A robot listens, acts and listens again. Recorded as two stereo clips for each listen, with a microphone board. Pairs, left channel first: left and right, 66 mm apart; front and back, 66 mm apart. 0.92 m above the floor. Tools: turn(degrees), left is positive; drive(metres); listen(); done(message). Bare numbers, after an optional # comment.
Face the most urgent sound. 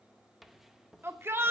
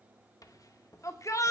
# The shout: 35° right.
turn(-35)
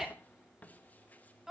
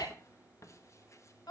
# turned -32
done("Facing the shout, 2 to 4 m away.")